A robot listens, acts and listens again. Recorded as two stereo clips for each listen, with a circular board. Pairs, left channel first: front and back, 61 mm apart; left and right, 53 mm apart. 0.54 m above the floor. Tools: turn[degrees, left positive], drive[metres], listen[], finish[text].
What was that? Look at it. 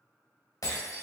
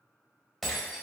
Action: finish[Found it: breaking glass, straight ahead.]